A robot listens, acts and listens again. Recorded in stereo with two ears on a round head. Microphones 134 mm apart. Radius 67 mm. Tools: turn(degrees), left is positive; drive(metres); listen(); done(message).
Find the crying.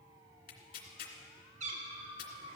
listen()
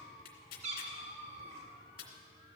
listen()
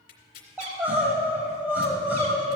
turn(degrees=-30)
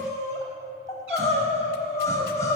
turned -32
turn(degrees=20)
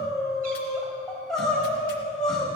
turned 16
done("Found it: crying, straight ahead.")